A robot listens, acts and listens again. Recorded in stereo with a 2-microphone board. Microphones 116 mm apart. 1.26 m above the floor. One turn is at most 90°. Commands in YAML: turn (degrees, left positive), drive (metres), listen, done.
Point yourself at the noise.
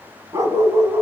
turn: -20
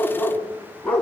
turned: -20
turn: 10
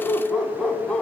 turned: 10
turn: 10
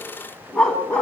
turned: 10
turn: 10
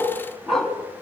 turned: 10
done: "Found it: a dog barking, straight ahead."